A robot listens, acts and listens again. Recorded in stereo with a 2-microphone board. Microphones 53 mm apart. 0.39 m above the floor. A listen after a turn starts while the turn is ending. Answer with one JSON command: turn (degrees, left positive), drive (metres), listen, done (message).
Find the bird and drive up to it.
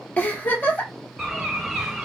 {"turn": -30}
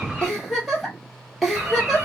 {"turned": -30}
{"turn": -140}
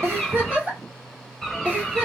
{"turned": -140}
{"turn": 10}
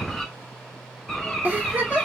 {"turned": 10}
{"drive": 1.0}
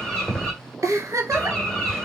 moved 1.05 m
{"turn": 15}
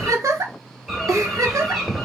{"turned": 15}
{"drive": 1.0}
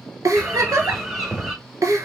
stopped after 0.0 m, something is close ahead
{"done": "Arrived at the bird, straight ahead."}